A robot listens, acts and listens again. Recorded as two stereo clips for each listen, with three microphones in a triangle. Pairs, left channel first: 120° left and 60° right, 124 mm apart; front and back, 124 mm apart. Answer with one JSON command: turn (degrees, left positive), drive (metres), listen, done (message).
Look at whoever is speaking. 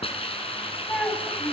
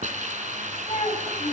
{"turn": 40}
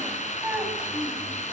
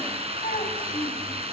{"turn": 15}
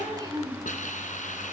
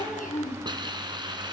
{"done": "Found it: a child speaking, straight ahead, over 4 m away."}